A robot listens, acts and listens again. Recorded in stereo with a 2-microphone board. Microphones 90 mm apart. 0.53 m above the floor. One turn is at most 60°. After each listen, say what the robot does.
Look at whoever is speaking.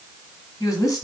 Turn 40° left.
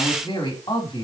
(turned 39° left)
Turn 60° left.
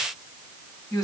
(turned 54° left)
Turn 45° left.
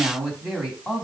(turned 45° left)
Found it: a woman speaking, straight ahead.